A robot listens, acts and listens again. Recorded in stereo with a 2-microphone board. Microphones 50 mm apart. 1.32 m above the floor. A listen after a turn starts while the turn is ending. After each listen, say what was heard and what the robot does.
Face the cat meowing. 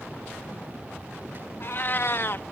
The cat meowing: about 50° left or 130° left. Turn 50° left.
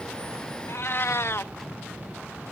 So it is at 70° left. Turn 70° left.
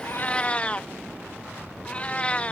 The cat meowing is now 30° left. Turn 30° left.
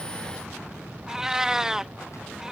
The cat meowing is now 15° right. Turn 15° right.
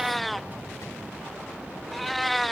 Found it: a cat meowing, straight ahead.